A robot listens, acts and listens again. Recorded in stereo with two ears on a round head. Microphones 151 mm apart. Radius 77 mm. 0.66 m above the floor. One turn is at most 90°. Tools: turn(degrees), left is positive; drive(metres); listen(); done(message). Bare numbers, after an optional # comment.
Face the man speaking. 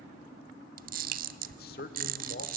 # The man speaking: about 55° left or 125° left.
turn(55)
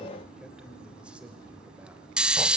done("Facing the man speaking.")